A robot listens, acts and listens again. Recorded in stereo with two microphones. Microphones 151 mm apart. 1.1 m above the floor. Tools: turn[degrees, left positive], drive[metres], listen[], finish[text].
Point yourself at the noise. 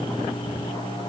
Action: listen[]
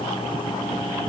Action: listen[]
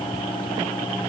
Action: finish[I can't make out anything.]